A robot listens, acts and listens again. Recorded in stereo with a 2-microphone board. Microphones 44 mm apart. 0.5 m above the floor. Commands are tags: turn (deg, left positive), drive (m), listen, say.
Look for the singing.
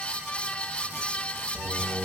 <turn deg="65"/>
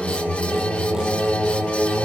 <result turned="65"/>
<turn deg="45"/>
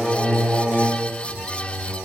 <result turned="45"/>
<say>Found it: singing, straight ahead.</say>